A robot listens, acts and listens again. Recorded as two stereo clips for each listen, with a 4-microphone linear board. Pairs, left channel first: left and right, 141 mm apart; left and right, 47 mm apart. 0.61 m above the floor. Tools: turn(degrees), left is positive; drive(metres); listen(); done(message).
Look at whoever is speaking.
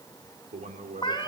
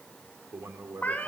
turn(degrees=-55)
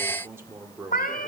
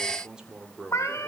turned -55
turn(degrees=-20)
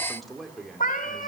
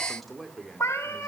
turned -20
done("Found it: a man speaking, straight ahead.")